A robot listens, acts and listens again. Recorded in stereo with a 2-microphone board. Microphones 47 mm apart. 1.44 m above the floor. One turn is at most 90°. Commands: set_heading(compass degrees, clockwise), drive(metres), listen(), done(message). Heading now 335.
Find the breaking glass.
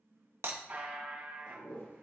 set_heading(35)
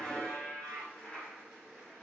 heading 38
listen()
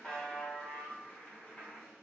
done("I heard breaking glass, but can't make it out now. It was about 5° left or 60° right.")